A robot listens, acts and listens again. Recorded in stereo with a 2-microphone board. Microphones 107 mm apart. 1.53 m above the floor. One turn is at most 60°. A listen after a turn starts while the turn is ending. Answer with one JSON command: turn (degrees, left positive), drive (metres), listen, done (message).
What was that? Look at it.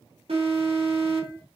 {"turn": -60}
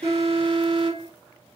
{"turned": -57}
{"turn": -55}
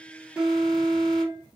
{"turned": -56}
{"done": "Found it: an alarm, straight ahead."}